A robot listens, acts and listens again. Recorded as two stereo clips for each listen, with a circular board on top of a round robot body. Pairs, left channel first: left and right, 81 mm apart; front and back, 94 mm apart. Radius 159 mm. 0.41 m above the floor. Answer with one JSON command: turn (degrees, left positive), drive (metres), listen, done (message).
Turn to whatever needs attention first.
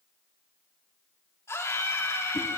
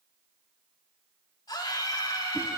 {"turn": 40}
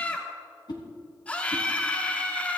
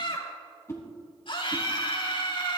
{"turn": 20}
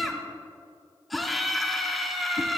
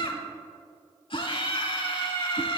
{"done": "Found it: a scream, straight ahead, 2 to 4 m away."}